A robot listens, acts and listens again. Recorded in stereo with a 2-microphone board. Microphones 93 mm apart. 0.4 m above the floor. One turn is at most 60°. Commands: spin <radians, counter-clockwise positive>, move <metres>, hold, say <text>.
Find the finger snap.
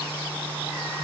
hold
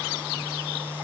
hold
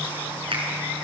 spin -1.05
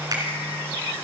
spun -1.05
spin -0.79
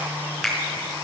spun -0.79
say Found it: a finger snap, straight ahead.